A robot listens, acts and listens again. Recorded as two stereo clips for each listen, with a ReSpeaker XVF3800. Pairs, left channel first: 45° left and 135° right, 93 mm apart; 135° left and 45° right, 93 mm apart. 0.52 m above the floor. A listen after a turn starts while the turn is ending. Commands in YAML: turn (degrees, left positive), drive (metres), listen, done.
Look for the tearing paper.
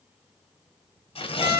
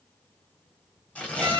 turn: 60
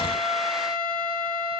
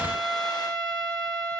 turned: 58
listen: true
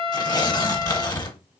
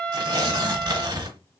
done: "Facing the tearing paper, under 1 m away."